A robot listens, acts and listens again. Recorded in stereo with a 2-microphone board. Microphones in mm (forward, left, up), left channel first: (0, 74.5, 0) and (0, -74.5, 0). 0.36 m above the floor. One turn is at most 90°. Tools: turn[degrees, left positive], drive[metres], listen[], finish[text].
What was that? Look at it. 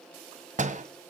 Thought: The door slam: about 55° right or 125° right.
Action: turn[-55]
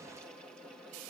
Action: listen[]
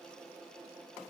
Action: finish[I heard a door slam, but can't make it out now. It was about straight ahead or 70° right.]